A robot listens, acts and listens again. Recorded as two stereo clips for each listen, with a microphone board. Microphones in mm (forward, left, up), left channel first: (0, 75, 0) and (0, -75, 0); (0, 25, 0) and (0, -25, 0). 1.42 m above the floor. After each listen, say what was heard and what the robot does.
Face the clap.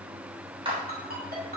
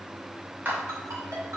The clap: about 35° right or 145° right. Turn 35° right.
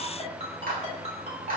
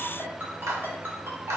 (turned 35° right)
So it is at 110° right. Turn 110° right.
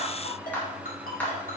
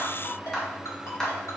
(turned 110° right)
The clap is now 10° left. Turn 10° left.
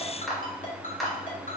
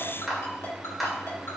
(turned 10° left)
Found it: a clap, straight ahead.